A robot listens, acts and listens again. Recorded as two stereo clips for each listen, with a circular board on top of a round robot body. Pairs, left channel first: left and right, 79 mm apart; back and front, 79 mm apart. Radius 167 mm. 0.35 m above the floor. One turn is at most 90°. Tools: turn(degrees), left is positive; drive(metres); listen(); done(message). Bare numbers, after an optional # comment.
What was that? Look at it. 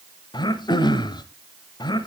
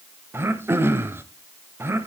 # The throat clearing: 60° left.
turn(60)
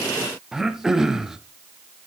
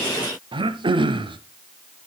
done("Facing the throat clearing, under 1 m away.")